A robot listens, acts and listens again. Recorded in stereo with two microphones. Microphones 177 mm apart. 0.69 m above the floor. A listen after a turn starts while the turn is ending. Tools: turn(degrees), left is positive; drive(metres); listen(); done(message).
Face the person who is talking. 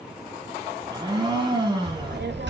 turn(degrees=-90)
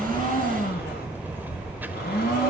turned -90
turn(degrees=-10)
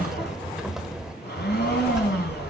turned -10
done("Found it: a child speaking, straight ahead, 1 to 2 m away.")